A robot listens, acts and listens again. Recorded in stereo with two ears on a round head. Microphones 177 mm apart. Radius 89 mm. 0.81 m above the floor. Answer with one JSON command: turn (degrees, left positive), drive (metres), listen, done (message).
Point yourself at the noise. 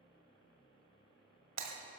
{"turn": -90}
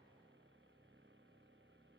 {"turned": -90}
{"done": "Facing where the breaking glass came from. I can't hear it now."}